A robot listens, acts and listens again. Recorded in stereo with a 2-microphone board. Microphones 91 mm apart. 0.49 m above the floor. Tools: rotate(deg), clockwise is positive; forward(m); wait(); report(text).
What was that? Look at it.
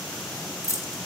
rotate(-35)
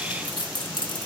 rotate(-105)
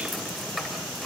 report("Facing the keys jangling, 1 to 2 m away.")